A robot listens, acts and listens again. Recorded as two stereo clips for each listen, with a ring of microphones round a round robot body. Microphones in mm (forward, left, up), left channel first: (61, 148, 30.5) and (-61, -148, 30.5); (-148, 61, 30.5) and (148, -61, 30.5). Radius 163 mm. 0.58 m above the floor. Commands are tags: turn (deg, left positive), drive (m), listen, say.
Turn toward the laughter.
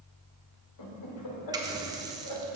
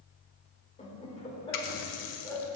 <turn deg="75"/>
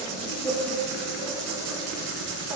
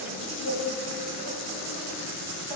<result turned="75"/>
<turn deg="-35"/>
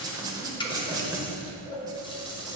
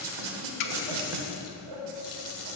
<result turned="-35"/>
<turn deg="-15"/>
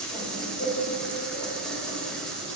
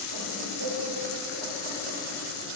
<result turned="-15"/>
<say>Found it: laughter, straight ahead, 2 to 4 m away.</say>